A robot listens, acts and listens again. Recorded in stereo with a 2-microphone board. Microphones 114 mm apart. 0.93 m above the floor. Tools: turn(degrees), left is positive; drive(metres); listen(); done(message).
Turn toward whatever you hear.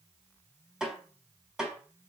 turn(degrees=-30)
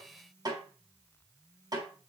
turn(degrees=-145)
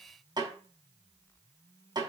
turn(degrees=-40)
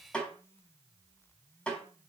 turn(degrees=10)
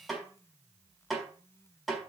done("Facing the snare drum, 2 to 4 m away.")